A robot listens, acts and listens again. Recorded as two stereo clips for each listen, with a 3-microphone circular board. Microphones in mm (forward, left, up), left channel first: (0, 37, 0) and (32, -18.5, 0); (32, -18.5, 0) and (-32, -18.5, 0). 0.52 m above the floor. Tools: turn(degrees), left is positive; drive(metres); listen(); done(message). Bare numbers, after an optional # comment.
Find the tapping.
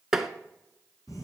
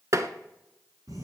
# The tapping: 145° right.
turn(-145)
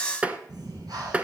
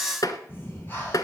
# The tapping is now 10° left.
turn(10)
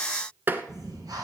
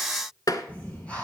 done("Found it: tapping, straight ahead, under 1 m away.")